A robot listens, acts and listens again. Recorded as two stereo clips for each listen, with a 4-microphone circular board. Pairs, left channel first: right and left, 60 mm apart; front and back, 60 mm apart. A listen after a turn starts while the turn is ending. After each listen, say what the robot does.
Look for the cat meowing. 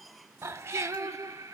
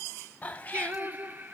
Turn 60° left.
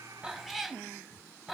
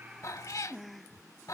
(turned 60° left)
Found it: a cat meowing, straight ahead, under 1 m away.